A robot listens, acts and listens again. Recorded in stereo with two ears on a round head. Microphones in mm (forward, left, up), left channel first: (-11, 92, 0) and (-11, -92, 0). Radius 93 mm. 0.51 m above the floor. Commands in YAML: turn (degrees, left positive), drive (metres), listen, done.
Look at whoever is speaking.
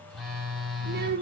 turn: -50
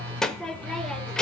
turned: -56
done: "Facing the child speaking, under 1 m away."